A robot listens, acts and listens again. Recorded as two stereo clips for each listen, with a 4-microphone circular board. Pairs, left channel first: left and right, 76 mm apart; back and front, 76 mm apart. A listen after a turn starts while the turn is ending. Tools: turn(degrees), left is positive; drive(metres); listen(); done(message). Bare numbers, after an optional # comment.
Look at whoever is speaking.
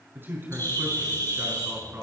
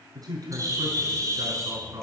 # The man speaking: 30° right.
turn(-30)
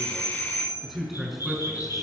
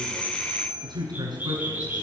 done("Facing the man speaking, over 4 m away.")